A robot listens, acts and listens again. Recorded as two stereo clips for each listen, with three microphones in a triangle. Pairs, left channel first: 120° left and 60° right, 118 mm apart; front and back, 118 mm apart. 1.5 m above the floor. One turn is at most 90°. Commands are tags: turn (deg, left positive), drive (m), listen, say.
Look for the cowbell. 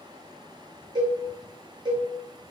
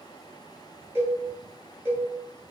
<turn deg="-90"/>
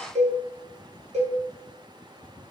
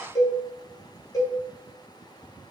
<turn deg="-60"/>
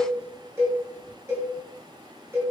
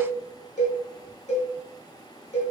<turn deg="10"/>
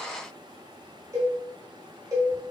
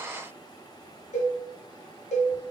<say>Facing the cowbell, 1 to 2 m away.</say>